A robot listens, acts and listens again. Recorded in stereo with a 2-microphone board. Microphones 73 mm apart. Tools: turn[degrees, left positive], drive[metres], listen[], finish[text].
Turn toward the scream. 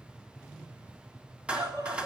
Thought: The scream: about 65° right or 115° right.
Action: turn[-65]
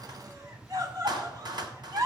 Thought: So it is at 50° right.
Action: turn[-50]
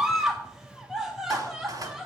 Action: finish[Found it: a scream, straight ahead, 1 to 2 m away.]